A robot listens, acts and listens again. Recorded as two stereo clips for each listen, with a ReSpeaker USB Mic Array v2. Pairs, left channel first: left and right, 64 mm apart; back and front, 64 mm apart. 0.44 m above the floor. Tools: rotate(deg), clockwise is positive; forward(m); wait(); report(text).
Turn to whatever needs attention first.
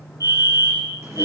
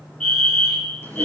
rotate(105)
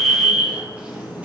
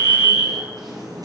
rotate(-10)
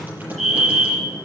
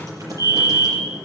report("Found it: a fire alarm, straight ahead, over 4 m away.")